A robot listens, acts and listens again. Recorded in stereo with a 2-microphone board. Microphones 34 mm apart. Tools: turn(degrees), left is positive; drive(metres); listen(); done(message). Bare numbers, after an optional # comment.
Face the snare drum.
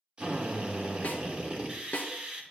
# The snare drum: about 50° left or 130° left.
turn(50)
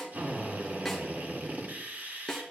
done("Facing the snare drum, 1 to 2 m away.")